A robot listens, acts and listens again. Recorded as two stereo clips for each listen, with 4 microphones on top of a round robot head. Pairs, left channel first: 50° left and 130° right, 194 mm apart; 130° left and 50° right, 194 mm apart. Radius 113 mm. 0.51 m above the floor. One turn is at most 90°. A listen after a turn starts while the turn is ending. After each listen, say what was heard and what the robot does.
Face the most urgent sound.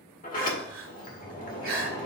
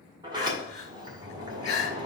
The crying: 175° right. Turn 90° right.
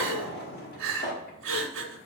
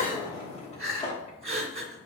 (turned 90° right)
The crying is now 110° right. Turn 90° right.
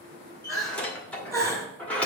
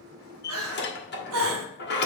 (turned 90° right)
The crying is now 55° right. Turn 55° right.
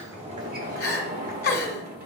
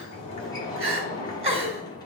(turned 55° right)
The crying is now 10° left. Turn 10° left.
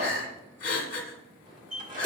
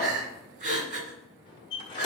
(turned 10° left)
Found it: crying, straight ahead, 1 to 2 m away.